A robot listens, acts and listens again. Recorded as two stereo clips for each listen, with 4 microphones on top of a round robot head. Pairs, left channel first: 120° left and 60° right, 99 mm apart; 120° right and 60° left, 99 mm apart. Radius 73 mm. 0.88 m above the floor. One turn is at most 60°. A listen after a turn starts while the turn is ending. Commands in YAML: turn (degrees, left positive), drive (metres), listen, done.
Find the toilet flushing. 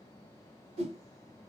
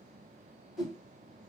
listen: true
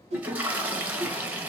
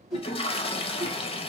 turn: -60
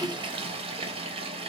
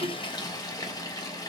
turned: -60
turn: -60
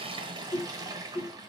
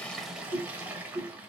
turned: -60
turn: -15
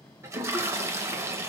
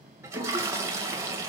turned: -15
done: "Found it: a toilet flushing, straight ahead, under 1 m away."